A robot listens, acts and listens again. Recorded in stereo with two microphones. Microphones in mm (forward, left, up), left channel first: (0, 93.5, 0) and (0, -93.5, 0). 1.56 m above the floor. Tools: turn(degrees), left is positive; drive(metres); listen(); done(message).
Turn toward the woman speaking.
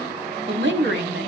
turn(degrees=-90)
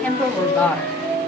turn(degrees=10)
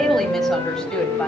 listen()
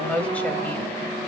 done("Found it: a woman speaking, straight ahead.")